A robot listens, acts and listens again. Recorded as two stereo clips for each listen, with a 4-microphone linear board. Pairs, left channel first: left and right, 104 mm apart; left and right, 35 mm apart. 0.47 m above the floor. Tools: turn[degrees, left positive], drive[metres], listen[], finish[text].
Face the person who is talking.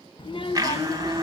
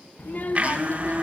Thought: The child speaking: about 55° left or 125° left.
Action: turn[55]
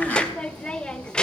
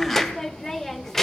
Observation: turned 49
Thought: So it is at 10° left.
Action: turn[10]
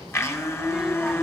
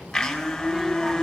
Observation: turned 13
Action: finish[Found it: a child speaking, straight ahead.]